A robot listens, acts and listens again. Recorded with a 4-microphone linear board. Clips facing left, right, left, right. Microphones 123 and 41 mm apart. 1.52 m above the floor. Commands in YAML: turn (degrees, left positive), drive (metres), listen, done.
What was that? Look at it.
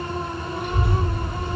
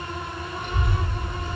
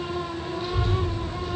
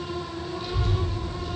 turn: 30
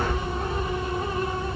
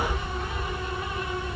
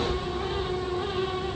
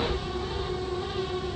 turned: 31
turn: 130
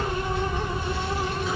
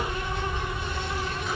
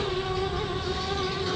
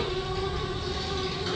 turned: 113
done: "Facing the child speaking, 2 to 4 m away."